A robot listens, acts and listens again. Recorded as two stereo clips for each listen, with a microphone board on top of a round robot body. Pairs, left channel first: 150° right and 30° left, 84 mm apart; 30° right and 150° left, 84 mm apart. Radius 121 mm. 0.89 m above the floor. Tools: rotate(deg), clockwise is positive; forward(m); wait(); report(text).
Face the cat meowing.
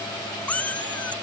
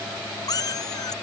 rotate(75)
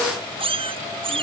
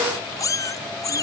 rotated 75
rotate(-20)
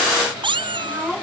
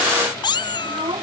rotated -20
report("Found it: a cat meowing, straight ahead.")